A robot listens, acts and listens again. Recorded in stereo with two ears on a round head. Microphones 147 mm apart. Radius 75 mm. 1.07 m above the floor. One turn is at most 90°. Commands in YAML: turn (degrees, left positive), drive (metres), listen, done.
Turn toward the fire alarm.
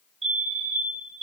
turn: -35
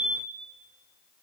done: "Facing the fire alarm."